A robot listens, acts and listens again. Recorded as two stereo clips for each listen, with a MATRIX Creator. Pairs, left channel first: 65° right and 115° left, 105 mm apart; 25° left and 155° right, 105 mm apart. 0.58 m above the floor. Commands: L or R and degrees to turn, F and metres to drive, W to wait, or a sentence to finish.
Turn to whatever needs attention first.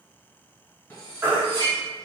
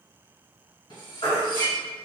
L40
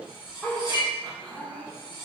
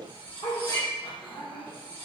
W
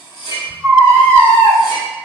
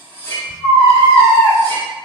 Found it: a baby crying, straight ahead.